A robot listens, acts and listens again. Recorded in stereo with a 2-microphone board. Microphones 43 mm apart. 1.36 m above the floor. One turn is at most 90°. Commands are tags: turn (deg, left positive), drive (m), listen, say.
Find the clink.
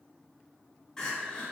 <listen/>
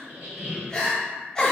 <listen/>
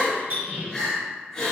<turn deg="-65"/>
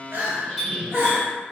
<turn deg="-10"/>
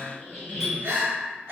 <listen/>
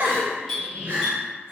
<say>Found it: a clink, straight ahead, 1 to 2 m away.</say>